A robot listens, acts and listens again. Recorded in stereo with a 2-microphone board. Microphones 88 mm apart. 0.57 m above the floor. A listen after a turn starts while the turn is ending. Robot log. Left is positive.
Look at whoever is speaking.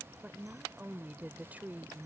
note: The woman speaking: about 20° right or 160° right.
cmd yaw -20
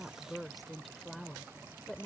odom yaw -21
end: Found it: a woman speaking, straight ahead.